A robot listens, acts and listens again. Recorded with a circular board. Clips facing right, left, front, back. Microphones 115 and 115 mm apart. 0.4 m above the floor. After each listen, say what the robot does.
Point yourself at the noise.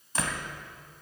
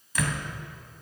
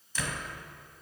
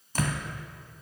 Turn 145° right.
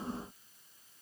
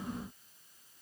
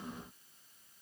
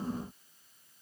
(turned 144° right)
Facing where the door slam came from. I can't hear it now.